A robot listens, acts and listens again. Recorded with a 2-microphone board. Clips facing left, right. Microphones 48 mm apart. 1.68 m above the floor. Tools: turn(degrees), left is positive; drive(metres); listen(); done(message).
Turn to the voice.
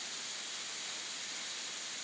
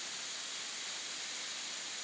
listen()
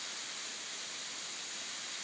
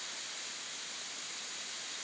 listen()
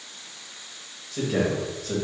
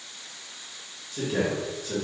turn(degrees=50)
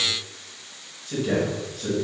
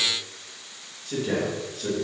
done("Found it: a man speaking, straight ahead.")